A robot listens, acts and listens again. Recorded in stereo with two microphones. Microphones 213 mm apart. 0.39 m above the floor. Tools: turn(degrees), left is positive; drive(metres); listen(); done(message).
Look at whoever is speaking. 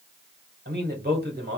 turn(degrees=-50)
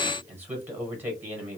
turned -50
turn(degrees=-10)
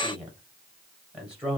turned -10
done("Facing the man speaking, 1 to 2 m away.")